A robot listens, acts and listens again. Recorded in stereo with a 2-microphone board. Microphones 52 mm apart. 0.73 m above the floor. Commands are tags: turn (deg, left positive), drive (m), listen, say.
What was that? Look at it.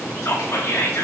<turn deg="60"/>
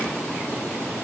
<listen/>
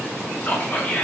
<turn deg="35"/>
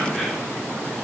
<listen/>
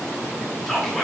<say>Facing the whispering.</say>